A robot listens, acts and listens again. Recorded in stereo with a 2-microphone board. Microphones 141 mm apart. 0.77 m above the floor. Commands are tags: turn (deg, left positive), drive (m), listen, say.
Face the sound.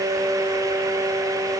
<listen/>
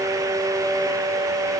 <listen/>
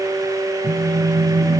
<turn deg="-90"/>
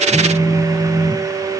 <say>Facing the phone buzzing, 1 to 2 m away.</say>